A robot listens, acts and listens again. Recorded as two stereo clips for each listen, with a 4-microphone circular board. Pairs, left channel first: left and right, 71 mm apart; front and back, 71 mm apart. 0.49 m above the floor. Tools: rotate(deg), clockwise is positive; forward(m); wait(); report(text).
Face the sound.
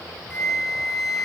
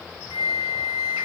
report("Facing the flute.")